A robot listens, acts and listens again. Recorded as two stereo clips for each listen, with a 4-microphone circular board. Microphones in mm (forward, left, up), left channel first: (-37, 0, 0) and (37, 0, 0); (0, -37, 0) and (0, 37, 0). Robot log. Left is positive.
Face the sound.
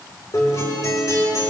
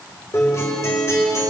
note: The guitar: 140° right.
cmd yaw -140
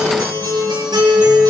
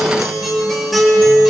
end: Facing the guitar.